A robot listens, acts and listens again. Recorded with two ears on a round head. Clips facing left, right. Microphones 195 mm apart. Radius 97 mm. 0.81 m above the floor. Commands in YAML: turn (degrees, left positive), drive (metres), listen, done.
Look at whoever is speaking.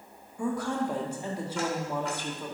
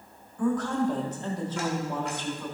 turn: 30
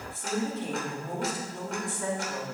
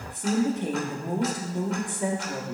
turn: -20
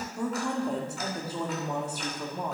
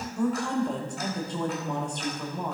done: "Facing the woman speaking, 1 to 2 m away."